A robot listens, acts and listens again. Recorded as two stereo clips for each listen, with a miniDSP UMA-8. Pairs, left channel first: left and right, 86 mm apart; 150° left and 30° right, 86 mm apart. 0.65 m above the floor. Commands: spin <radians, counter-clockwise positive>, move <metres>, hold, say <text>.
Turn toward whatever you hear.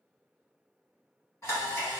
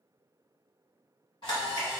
spin 2.53
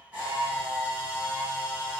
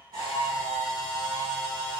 spin -0.26
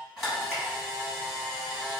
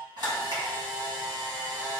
say Found it: a camera shutter, straight ahead.